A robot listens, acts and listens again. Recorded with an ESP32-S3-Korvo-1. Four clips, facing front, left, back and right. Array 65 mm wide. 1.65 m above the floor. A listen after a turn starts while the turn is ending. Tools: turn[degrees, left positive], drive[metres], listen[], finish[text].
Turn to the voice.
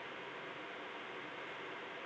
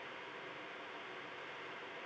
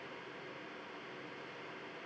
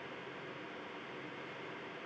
Action: listen[]
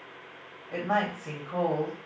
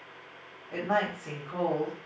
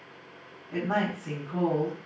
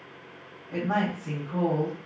Thought: The woman speaking: 35° left.
Action: turn[35]
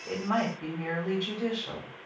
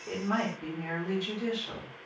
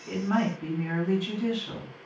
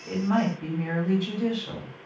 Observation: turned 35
Action: finish[Found it: a woman speaking, straight ahead, 1 to 2 m away.]